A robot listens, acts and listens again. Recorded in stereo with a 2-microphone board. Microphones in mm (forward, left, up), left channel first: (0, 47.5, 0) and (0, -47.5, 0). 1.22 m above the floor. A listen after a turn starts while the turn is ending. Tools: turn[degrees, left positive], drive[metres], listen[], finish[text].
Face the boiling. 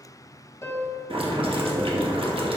Action: turn[-90]
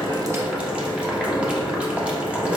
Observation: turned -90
Thought: So it is at 10° right.
Action: turn[-10]
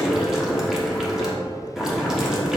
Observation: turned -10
Action: finish[Found it: boiling, straight ahead.]